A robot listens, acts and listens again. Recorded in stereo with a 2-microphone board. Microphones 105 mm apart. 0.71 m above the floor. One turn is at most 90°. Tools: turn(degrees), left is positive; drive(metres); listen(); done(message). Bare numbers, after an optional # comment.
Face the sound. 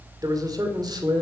# The man speaking: about 45° right or 135° right.
turn(-45)
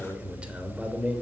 # So it is at 15° right.
turn(-15)
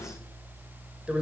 # The man speaking is now 10° right.
turn(-10)
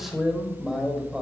done("Facing the man speaking.")